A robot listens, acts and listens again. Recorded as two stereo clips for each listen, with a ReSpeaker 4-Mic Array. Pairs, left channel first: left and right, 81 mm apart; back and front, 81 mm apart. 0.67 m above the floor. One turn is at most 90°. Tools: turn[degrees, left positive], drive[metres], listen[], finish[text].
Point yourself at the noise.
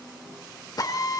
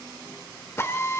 Thought: The drill: 125° left.
Action: turn[90]
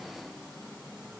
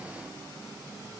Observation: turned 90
Thought: Nothing new. It was at 35° left.
Action: turn[35]
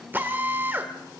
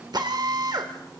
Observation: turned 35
Thought: The drill is now 25° right.
Action: turn[-25]
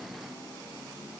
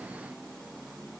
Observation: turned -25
Action: listen[]
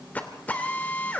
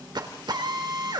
Thought: The drill is now 20° left.
Action: turn[20]
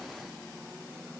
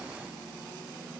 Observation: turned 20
Action: listen[]
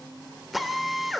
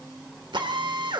Action: finish[Facing the drill, 2 to 4 m away.]